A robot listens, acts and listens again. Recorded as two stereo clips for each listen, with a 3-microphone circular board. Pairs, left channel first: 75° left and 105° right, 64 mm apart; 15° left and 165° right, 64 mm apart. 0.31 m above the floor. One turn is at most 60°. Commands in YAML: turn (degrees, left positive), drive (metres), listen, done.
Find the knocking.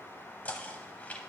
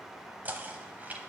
turn: 60
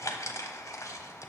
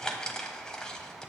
turn: 60
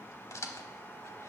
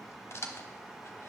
turn: 50
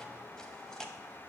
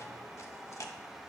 done: "Found it: knocking, straight ahead."